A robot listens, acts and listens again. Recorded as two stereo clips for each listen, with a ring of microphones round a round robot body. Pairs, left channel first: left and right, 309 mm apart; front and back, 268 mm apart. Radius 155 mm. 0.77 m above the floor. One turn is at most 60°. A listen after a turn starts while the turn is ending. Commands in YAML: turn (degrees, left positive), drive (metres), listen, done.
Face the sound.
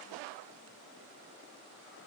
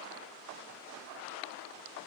listen: true
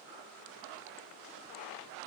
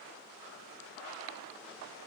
listen: true
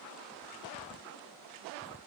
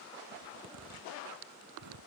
turn: 60
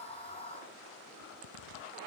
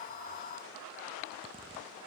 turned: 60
turn: 60
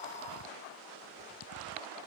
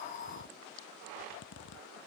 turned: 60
turn: 45
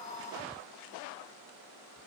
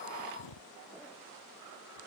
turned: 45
done: "Facing the zipper."